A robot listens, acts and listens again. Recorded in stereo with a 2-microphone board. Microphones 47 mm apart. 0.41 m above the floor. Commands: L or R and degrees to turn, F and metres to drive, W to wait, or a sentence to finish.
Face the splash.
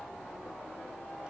W
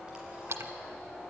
R90
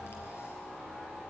Facing where the splash came from. I can't hear it now.